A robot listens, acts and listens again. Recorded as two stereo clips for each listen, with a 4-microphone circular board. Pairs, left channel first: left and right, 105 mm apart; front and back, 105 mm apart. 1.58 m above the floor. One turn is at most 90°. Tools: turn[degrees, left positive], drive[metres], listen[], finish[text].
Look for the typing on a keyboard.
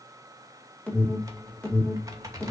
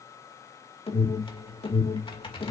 Thought: The typing on a keyboard: 35° right.
Action: turn[-35]
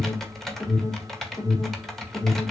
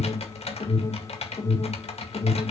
Action: finish[Facing the typing on a keyboard, 2 to 4 m away.]